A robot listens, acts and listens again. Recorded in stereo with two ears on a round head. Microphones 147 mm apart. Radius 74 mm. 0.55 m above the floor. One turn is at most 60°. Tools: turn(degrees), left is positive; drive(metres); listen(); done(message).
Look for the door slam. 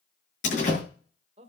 turn(degrees=45)
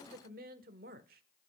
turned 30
listen()
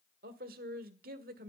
done("I heard a door slam, but can't make it out now. It was about 15° left or 105° left.")